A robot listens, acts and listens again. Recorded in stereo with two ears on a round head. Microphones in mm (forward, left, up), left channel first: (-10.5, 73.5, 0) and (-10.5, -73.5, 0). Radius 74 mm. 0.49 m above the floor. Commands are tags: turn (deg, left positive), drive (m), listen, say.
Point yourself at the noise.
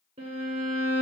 <turn deg="-35"/>
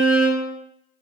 <say>Found it: a violin, straight ahead.</say>